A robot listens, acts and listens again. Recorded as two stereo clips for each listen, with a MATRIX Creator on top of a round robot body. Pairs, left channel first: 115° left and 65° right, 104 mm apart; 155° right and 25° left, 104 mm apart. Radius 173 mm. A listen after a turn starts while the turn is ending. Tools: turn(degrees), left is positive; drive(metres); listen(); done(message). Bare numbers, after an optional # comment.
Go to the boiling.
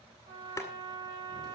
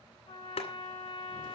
# The boiling: straight behind.
turn(180)
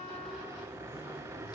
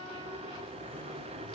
drive(1.0)
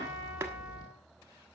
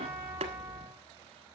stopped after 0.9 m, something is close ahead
listen()
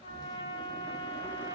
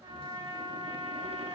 listen()
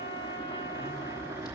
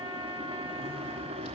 done("Arrived at the boiling, straight ahead.")